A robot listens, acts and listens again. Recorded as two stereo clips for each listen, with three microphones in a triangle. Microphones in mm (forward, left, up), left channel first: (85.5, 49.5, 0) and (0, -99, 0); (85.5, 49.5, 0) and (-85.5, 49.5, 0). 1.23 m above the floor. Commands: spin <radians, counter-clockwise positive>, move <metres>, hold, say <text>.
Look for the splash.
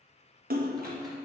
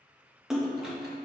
spin -1.57
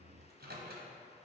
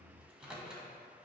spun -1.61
say Facing where the splash came from. I can't hear it now.